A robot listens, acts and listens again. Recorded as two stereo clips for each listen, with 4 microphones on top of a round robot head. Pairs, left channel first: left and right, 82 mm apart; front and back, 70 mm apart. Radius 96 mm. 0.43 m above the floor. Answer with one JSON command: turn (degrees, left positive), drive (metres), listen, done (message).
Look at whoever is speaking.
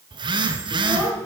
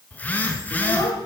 {"turn": 15}
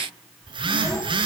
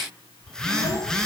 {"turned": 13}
{"listen": true}
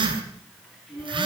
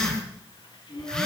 {"done": "Found it: a child speaking, straight ahead, over 4 m away."}